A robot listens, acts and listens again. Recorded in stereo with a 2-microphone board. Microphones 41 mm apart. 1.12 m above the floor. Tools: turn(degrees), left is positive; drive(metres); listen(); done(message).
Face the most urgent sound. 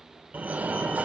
turn(degrees=-35)
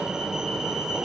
turn(degrees=-15)
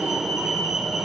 done("Facing the fire alarm, 1 to 2 m away.")